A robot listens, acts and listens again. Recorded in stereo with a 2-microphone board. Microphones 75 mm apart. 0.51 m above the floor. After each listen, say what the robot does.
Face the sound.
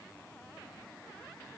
Keep listening.
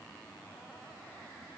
Keep listening.
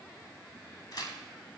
Turn 55° left.
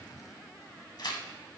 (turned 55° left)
Turn 70° left.
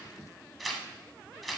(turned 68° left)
Facing the tearing paper.